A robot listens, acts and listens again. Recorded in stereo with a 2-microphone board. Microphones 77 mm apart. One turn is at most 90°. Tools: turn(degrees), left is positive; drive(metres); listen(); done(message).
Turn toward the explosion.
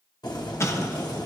turn(degrees=35)
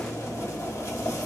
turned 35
listen()
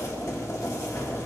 done("I heard an explosion, but can't make it out now. It was about straight ahead or 110° left.")